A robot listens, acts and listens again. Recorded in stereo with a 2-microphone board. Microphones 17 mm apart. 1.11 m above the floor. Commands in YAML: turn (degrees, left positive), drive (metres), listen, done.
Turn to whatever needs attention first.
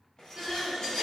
turn: -65
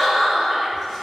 turn: -45
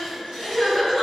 done: "Facing the crying, 1 to 2 m away."